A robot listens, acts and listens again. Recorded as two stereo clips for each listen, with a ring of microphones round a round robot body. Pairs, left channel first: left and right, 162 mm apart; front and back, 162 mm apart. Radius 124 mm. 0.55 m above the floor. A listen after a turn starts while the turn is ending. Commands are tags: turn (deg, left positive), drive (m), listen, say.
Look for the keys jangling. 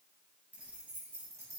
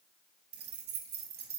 <turn deg="-165"/>
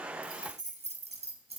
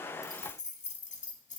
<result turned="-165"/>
<turn deg="-40"/>
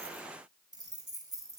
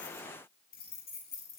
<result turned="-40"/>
<turn deg="-20"/>
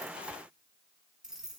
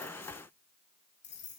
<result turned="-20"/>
<say>Found it: keys jangling, straight ahead, over 4 m away.</say>